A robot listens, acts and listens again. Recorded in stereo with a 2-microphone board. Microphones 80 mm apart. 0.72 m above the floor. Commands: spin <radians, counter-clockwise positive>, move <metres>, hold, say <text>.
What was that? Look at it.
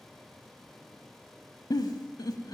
spin 1.05
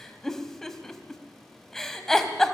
say Facing the giggle, under 1 m away.